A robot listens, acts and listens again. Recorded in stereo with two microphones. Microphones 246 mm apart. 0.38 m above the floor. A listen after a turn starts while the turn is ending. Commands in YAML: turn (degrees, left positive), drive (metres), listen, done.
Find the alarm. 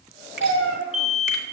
turn: 30
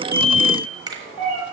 turn: -35
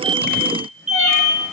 done: "Found it: an alarm, straight ahead."